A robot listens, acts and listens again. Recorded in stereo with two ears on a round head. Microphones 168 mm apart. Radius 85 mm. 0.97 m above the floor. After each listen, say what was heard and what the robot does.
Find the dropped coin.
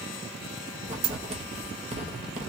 The dropped coin: about 75° right or 105° right. Turn 75° right.
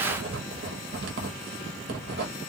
Keep listening.
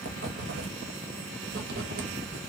I heard a dropped coin, but can't make it out now. It was about straight ahead or 30° right.